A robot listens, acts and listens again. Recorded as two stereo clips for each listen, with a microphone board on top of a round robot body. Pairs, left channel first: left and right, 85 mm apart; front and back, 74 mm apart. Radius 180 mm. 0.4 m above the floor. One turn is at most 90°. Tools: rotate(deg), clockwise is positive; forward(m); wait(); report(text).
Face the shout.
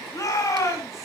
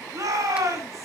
rotate(-90)
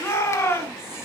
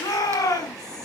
rotate(-35)
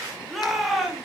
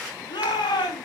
report("Found it: a shout, straight ahead, over 4 m away.")